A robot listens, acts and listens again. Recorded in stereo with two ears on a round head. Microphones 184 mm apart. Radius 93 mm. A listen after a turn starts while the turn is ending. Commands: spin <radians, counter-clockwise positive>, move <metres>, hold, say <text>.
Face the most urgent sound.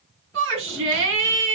spin -1.22
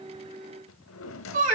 spin -0.70
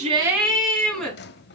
say Facing the shout.